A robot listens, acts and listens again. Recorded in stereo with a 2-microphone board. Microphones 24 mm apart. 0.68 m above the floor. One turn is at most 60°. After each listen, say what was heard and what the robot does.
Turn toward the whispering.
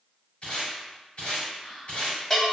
The whispering: about 45° left or 135° left. Turn 45° left.
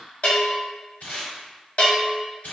So it is at 10° left. Turn 10° left.
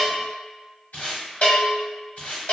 Keep listening.
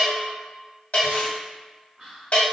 Facing the whispering.